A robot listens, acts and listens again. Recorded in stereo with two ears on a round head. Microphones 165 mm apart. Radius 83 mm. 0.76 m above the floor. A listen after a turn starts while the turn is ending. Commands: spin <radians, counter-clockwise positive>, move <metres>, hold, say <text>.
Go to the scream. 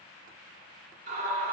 spin -0.96
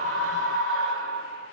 spin -1.13
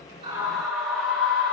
move 1.0
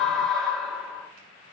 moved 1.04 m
move 1.0
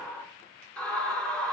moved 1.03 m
move 1.0
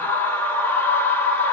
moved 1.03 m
spin 0.26
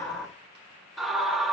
move 1.0
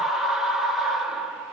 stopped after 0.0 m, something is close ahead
say I am next to the scream.